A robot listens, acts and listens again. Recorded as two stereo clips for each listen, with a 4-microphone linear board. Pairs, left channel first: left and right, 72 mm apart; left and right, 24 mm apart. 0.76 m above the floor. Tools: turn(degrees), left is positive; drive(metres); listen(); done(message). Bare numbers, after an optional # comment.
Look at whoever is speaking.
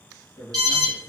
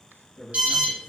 # The man speaking: about 55° left or 125° left.
turn(55)
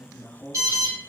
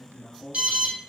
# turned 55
# So it is at 55° left.
turn(55)
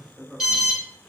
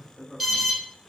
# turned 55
done("Facing the man speaking, 1 to 2 m away.")